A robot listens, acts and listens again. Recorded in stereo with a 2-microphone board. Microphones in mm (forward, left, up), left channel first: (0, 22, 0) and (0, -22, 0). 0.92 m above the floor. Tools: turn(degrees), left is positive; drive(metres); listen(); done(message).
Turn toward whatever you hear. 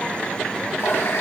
turn(degrees=90)
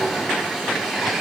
done("Found it: a running tap, straight ahead, 1 to 2 m away.")